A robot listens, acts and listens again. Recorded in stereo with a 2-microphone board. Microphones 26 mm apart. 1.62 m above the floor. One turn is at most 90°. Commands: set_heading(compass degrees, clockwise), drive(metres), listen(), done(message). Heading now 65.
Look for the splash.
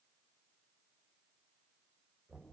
listen()
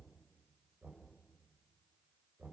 listen()
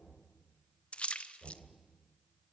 set_heading(15)
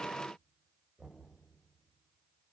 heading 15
listen()
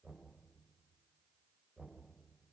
done("I heard a splash, but can't make it out now. It was about straight ahead or 80° left.")